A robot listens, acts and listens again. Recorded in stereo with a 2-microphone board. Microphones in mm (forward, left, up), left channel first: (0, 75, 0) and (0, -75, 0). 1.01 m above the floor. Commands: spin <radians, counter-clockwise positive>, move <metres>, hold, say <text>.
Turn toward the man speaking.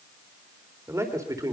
spin -0.44
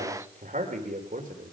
spin -2.01
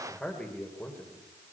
spin 0.26
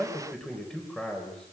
say Facing the man speaking, over 4 m away.